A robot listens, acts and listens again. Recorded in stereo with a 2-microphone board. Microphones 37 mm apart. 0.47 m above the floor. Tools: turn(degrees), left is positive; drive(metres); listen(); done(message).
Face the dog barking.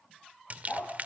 turn(degrees=30)
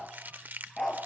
done("Found it: a dog barking, straight ahead.")